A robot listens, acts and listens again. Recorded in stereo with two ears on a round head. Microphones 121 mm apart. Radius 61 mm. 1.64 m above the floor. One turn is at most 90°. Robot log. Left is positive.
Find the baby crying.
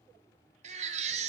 note: The baby crying: about 55° right or 125° right.
cmd yaw -55
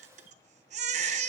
note: So it is at 60° right.
cmd yaw -60
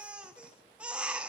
note: The baby crying is now 10° right.
cmd yaw -10
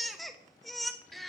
end: Facing the baby crying, under 1 m away.